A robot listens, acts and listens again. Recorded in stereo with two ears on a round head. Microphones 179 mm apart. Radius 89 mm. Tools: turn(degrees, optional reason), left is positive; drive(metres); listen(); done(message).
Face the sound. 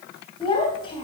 turn(degrees=25, reason="The child speaking: about 25° left or 155° left.")
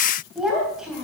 done("Found it: a child speaking, straight ahead, 2 to 4 m away.")